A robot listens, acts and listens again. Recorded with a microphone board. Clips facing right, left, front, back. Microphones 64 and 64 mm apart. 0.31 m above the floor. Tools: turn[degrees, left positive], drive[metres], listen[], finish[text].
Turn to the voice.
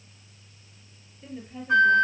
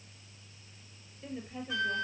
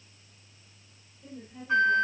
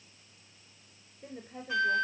Thought: The woman speaking: 170° right.
Action: turn[-170]
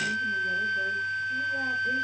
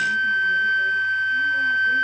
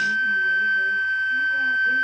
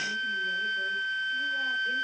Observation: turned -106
Thought: Nothing new. It was at 65° right.
Action: turn[-65]
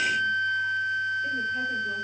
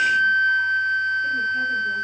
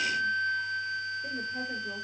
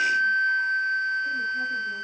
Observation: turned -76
Thought: Nothing new. It was at 10° left.
Action: turn[10]
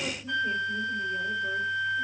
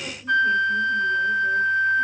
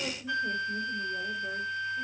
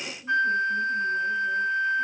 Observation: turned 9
Action: finish[I heard a woman speaking from this way, but can't make it out now.]